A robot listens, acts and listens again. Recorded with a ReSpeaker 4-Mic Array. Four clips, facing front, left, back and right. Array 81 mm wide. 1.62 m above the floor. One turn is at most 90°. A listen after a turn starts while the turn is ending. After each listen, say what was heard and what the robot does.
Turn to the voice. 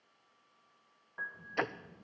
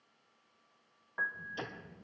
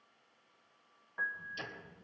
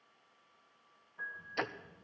The child speaking: 50° left. Turn 50° left.
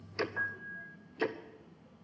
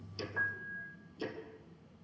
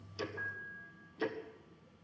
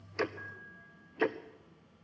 Facing the child speaking, 1 to 2 m away.